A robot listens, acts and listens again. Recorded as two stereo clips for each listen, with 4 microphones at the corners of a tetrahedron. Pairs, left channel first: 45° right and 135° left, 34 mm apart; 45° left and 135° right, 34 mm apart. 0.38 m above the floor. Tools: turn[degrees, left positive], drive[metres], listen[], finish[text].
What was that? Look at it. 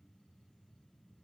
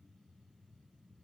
Action: listen[]
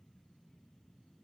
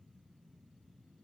Action: listen[]
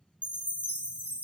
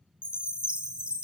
Thought: The chime: 170° left.
Action: turn[170]
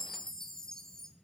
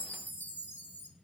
Thought: The chime is now 25° left.
Action: turn[25]
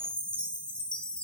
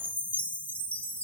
Thought: The chime is now 10° left.
Action: turn[10]
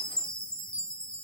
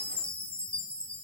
Action: finish[Found it: a chime, straight ahead, 1 to 2 m away.]